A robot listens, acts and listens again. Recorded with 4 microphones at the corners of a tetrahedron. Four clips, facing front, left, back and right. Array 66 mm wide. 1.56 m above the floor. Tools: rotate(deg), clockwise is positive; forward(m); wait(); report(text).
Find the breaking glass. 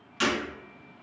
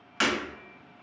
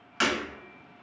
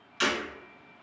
rotate(-125)
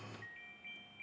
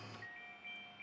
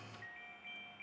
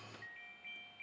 report("Facing where the breaking glass came from. I can't hear it now.")